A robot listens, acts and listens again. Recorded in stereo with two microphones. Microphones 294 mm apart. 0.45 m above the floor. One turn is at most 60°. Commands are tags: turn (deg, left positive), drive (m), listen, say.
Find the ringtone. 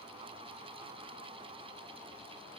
<listen/>
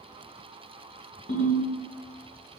<turn deg="40"/>
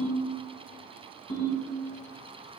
<turn deg="60"/>
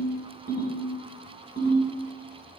<turn deg="30"/>
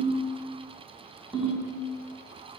<say>Facing the ringtone, 1 to 2 m away.</say>